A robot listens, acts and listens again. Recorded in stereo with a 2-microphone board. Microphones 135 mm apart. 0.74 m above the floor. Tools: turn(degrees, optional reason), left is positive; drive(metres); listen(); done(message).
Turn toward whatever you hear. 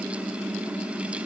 listen()
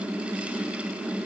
listen()
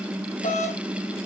turn(degrees=75, reason="The doorbell: about 75° left or 105° left.")
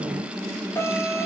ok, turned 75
turn(degrees=20, reason="So it is at 20° left.")
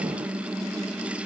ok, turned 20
listen()
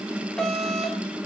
done("Facing the doorbell, 2 to 4 m away.")